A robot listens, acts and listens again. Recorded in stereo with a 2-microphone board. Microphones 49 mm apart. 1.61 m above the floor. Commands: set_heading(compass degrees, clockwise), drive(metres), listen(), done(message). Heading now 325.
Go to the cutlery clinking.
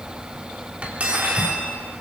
set_heading(350)
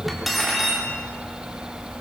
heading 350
drive(1.0)
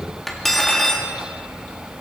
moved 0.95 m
drive(1.0)
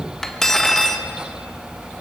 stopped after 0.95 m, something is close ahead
set_heading(340)
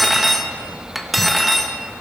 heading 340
done("I am next to the cutlery clinking.")